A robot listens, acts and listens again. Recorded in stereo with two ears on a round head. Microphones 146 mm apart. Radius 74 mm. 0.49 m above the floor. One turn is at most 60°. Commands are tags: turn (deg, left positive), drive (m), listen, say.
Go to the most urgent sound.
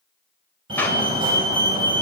<turn deg="-30"/>
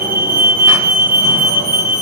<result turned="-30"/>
<turn deg="-60"/>
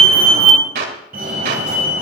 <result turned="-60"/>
<turn deg="-60"/>
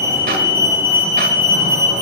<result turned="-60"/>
<turn deg="-15"/>
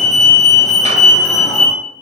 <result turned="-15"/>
<drive m="1.0"/>
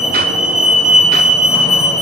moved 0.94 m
<drive m="1.0"/>
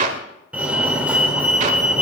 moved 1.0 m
<turn deg="-10"/>
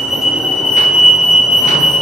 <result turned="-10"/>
<drive m="1.0"/>
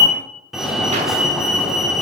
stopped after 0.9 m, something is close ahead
<say>Arrived at the fire alarm, straight ahead.</say>